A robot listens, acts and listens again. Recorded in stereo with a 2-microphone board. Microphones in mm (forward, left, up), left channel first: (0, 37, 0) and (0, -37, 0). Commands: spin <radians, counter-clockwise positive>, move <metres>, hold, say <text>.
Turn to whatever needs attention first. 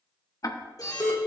spin 0.87
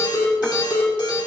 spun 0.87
spin 1.40
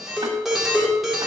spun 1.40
say Facing the alarm.